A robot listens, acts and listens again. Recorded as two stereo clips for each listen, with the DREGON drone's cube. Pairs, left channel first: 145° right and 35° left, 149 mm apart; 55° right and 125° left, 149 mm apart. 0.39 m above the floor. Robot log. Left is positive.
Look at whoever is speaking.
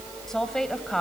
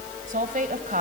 note: The woman speaking: 130° left.
cmd yaw +130
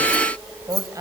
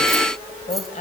note: The woman speaking is now 30° right.
cmd yaw -30
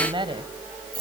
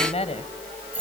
note: The woman speaking is now 15° right.
cmd yaw -15
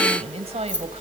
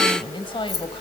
end: Facing the woman speaking.